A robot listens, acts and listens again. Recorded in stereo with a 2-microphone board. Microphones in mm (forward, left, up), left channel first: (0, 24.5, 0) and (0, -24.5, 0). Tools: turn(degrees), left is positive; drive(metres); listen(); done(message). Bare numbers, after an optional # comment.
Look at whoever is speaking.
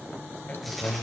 # The man speaking: about 35° left or 145° left.
turn(35)
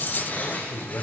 # So it is at 100° left.
turn(100)
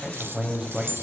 # The man speaking is now 15° right.
turn(-15)
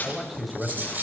done("Facing the man speaking.")